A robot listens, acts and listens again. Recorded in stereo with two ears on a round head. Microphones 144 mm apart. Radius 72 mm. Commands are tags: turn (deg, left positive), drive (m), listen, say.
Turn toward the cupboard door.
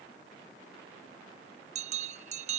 <listen/>
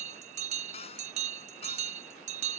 <turn deg="40"/>
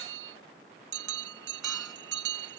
<listen/>
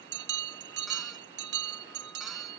<listen/>
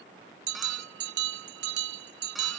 <say>I heard a cupboard door, but can't make it out now. It was about straight ahead or 100° left.</say>